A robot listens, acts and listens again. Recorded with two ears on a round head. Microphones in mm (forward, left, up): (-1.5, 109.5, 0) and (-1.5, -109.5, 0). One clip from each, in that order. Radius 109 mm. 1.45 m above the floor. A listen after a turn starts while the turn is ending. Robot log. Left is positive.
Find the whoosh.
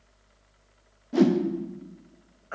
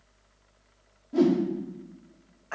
note: The whoosh: about 65° left or 115° left.
cmd yaw +65
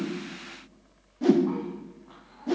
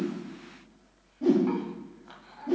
note: So it is at 50° left.
cmd yaw +50
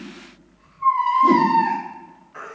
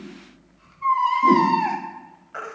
cmd idle
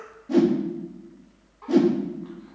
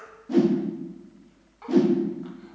end: Facing the whoosh.